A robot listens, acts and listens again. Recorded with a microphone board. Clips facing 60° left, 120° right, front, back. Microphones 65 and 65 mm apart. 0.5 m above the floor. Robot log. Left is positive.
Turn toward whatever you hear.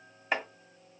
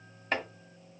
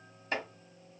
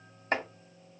note: The chopping: 140° left.
cmd yaw +140
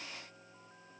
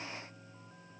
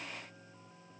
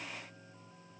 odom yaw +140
cmd idle
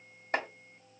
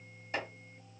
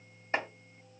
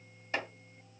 note: The chopping is now 55° left.
cmd yaw +55
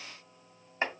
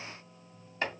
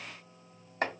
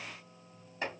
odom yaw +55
end: Found it: chopping, straight ahead.